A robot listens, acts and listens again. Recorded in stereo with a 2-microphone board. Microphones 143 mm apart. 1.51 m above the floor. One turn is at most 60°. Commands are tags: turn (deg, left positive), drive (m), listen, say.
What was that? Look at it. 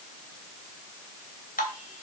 <turn deg="60"/>
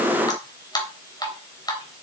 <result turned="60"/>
<turn deg="30"/>
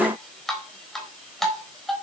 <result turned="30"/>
<say>Facing the dripping.</say>